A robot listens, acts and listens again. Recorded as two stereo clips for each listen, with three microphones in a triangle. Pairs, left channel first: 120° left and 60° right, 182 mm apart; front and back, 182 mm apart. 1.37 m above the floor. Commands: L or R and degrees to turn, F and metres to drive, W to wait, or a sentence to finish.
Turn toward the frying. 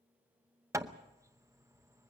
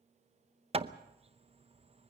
W
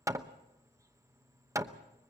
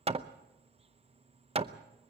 W
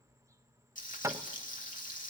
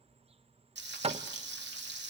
L165
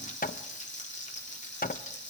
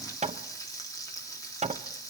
L70
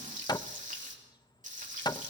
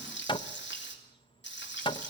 R15
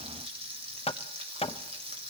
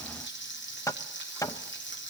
Found it: frying, straight ahead.